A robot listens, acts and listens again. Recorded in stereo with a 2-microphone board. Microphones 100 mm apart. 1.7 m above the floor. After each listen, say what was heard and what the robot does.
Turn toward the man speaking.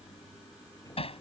Keep listening.
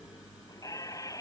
Keep listening.
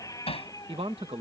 Turn 90° right.
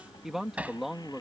Found it: a man speaking, straight ahead.